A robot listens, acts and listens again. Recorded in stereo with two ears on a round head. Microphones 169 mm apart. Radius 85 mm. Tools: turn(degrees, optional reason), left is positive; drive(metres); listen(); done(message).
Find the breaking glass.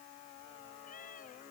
listen()
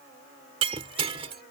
turn(degrees=-30, reason="The breaking glass: about 30° right or 150° right.")
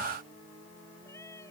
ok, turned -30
listen()
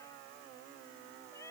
done("I heard breaking glass, but can't make it out now. It was about straight ahead or 120° right.")